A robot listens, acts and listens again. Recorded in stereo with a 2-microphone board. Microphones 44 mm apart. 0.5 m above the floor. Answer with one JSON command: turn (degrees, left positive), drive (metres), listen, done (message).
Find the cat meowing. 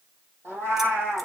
{"turn": -60}
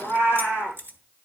{"turn": -60}
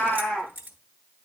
{"done": "Found it: a cat meowing, straight ahead, over 4 m away."}